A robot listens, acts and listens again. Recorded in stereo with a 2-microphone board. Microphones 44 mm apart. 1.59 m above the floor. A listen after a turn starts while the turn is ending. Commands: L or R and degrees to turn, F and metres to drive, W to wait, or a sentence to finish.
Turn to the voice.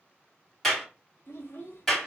L55
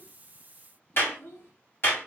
L65
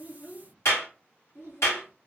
L60
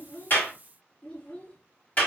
L25
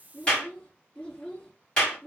L15
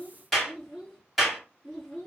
Facing the child speaking, 2 to 4 m away.